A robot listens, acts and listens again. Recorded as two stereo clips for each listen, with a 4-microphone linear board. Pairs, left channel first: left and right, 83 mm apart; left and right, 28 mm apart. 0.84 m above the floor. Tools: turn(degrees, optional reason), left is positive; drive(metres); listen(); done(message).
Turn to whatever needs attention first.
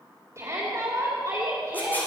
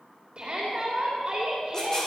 turn(degrees=-40, reason="The shout: about 40° right or 140° right.")
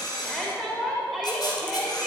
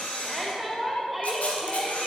done("Found it: a shout, straight ahead, 2 to 4 m away.")